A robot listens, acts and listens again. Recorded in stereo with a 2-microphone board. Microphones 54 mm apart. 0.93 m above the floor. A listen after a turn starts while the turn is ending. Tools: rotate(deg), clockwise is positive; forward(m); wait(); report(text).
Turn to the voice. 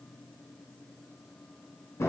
wait()
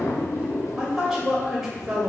rotate(30)
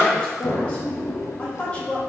rotate(-25)
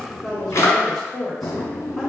report("Facing the woman speaking, 1 to 2 m away.")